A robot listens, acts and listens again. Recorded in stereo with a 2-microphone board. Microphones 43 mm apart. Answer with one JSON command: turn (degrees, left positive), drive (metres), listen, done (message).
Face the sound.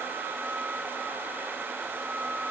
{"listen": true}
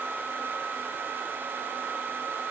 {"listen": true}
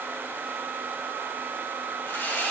{"turn": 75}
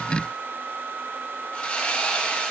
{"turn": 30}
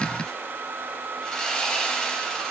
{"turn": 10}
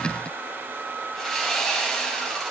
{"done": "Facing the sawing, 2 to 4 m away."}